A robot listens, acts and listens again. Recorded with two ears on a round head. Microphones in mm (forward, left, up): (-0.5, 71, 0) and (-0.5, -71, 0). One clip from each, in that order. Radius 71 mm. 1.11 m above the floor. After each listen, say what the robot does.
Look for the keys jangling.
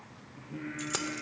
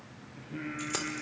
Turn 30° left.
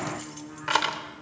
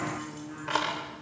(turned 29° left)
Turn 135° left.
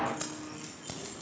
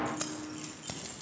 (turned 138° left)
Turn 10° right.
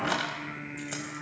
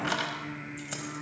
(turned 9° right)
Facing the keys jangling.